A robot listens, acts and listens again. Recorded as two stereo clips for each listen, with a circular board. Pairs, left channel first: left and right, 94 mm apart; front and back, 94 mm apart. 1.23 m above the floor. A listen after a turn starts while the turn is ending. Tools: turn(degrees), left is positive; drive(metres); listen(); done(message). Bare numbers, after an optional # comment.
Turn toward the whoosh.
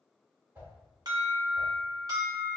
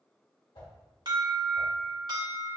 # The whoosh: 20° right.
turn(-20)
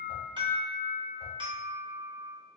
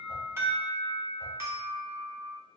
listen()
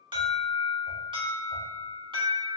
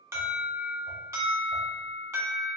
listen()
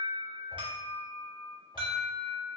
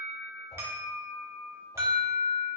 done("Facing where the whoosh came from. I can't hear it now.")